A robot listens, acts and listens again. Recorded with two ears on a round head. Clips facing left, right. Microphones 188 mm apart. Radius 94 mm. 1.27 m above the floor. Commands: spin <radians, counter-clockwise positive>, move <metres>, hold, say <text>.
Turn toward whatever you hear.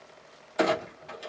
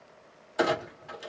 spin -0.52
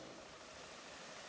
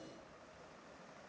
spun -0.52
hold
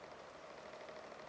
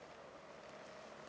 say I heard a clunk, but can't make it out now. It was about 20° left or 140° right.